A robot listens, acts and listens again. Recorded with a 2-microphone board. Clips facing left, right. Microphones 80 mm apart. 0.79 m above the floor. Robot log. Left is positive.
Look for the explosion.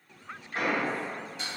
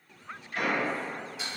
note: The explosion: about 30° left or 150° left.
cmd yaw +30
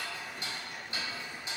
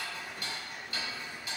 cmd idle
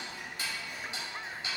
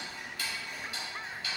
end: I heard an explosion, but can't make it out now. It was about straight ahead or 120° left.